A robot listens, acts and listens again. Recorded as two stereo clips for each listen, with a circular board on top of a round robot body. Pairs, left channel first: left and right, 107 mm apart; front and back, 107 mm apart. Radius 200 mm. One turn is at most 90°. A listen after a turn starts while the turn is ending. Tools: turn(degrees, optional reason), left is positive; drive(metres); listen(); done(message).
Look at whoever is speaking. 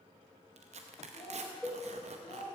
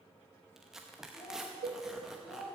turn(degrees=40, reason="The child speaking: 40° left.")
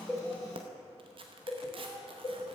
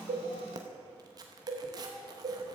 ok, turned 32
listen()
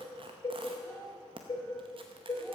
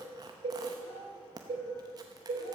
listen()
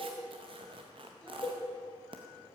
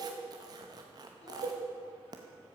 done("Facing where the child speaking came from. I can't hear it now.")